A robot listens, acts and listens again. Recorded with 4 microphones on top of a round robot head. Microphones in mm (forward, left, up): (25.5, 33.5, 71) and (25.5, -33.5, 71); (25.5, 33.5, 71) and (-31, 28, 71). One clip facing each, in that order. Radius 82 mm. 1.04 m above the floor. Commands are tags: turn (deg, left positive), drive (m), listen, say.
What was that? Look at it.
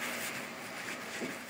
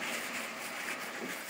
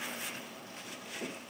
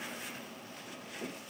<listen/>
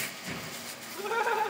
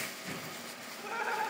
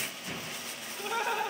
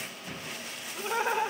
<turn deg="120"/>
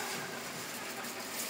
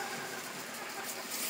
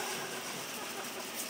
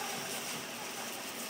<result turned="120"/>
<listen/>
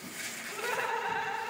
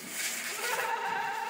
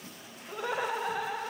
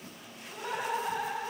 <say>Facing the laughter.</say>